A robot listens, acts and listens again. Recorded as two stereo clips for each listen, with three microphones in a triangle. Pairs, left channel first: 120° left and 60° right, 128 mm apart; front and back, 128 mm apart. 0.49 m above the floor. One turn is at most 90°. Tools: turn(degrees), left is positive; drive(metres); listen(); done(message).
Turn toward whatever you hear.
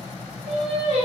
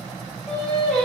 turn(degrees=-85)
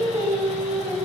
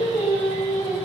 turn(degrees=-50)
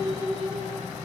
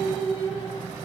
turn(degrees=-40)
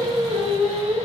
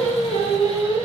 turn(degrees=-35)
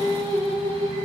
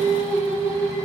turn(degrees=-20)
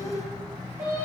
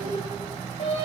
done("Facing the singing, 1 to 2 m away.")